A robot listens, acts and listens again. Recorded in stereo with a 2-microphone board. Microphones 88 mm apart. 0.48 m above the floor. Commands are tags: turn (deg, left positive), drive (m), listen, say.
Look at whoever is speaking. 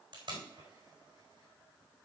<listen/>
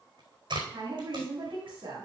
<turn deg="-70"/>
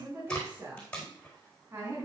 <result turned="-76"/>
<turn deg="-30"/>
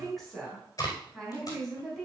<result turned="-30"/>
<say>Facing the woman speaking.</say>